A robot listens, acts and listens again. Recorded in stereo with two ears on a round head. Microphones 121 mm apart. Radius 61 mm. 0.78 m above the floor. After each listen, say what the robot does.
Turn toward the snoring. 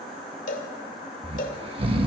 Turn 45° right.
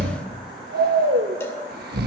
Turn 90° right.
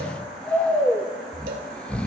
Turn 10° left.
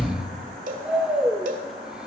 Facing the snoring, under 1 m away.